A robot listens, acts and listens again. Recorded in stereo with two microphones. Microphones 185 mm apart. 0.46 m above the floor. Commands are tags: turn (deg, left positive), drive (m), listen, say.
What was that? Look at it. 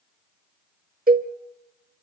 <turn deg="-50"/>
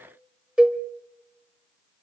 <say>Facing the cowbell.</say>